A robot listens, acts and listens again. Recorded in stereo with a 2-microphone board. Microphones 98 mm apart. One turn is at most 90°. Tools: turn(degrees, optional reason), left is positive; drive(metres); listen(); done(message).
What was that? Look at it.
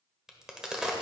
turn(degrees=-30)
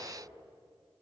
listen()
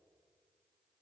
done("I heard a crack, but can't make it out now. It was about 25° left or 145° right.")